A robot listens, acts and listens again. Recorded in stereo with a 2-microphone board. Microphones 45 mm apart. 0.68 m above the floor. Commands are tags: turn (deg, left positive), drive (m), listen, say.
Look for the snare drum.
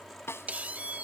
<turn deg="90"/>
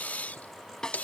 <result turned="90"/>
<turn deg="15"/>
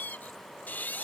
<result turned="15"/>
<listen/>
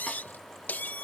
<listen/>
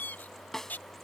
<turn deg="10"/>
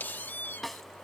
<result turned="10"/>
<say>Found it: a snare drum, straight ahead.</say>